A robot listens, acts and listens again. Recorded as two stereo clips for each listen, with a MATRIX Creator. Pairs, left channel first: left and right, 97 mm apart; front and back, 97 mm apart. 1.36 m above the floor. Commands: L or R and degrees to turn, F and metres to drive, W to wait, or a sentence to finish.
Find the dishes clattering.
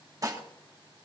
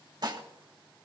R140
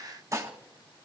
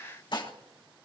R35
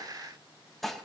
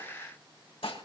Facing the dishes clattering.